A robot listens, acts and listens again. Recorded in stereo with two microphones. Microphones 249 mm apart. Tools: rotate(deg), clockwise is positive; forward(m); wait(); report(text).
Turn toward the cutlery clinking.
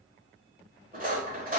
rotate(35)
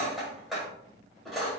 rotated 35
report("Found it: cutlery clinking, straight ahead, 1 to 2 m away.")